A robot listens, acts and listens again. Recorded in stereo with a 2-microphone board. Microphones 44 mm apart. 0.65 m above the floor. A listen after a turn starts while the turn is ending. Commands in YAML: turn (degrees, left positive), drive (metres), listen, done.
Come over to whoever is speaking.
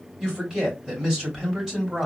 turn: -15
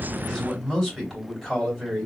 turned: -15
drive: 1.0
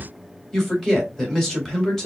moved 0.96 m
drive: 1.0
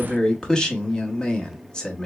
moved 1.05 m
turn: 25
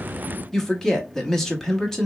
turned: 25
turn: 15
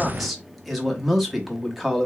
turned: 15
drive: 1.0
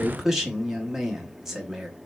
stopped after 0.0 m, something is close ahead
turn: -10
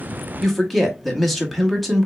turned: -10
done: "Arrived at the man speaking, straight ahead."